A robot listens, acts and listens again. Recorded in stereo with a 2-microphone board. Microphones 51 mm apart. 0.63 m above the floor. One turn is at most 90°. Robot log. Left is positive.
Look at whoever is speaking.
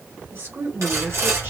note: The woman speaking: about 55° right or 125° right.
cmd yaw -55
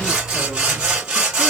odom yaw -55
cmd idle
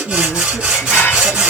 end: Facing the woman speaking.